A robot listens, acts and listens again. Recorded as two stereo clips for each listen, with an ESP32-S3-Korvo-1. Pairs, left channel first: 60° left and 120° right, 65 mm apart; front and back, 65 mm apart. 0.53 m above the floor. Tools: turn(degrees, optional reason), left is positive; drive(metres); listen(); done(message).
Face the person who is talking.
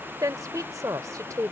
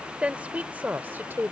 turn(degrees=-130, reason="The woman speaking: 130° right.")
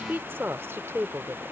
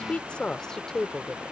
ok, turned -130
turn(degrees=-90, reason="The woman speaking is now 90° right.")
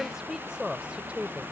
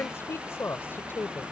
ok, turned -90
turn(degrees=-50, reason="The woman speaking is now 50° right.")
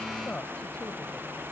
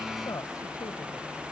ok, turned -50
turn(degrees=-10, reason="The woman speaking is now 10° right.")
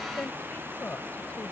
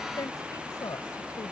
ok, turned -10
done("Found it: a woman speaking, straight ahead.")